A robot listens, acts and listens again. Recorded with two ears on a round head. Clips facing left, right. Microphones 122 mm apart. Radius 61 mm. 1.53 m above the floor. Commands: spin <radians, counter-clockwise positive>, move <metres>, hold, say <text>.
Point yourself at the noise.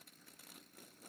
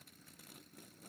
hold
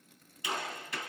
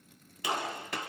spin -0.87
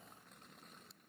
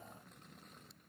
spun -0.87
hold
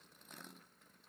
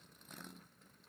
say I heard a gunshot, but can't make it out now. It was about straight ahead or 80° right.